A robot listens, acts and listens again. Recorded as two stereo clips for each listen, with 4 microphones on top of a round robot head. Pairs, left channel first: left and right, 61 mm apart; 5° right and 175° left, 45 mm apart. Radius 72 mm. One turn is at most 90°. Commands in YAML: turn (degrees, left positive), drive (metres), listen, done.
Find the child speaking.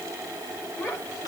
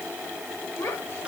turn: 35
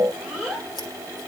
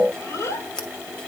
done: "Found it: a child speaking, straight ahead, over 4 m away."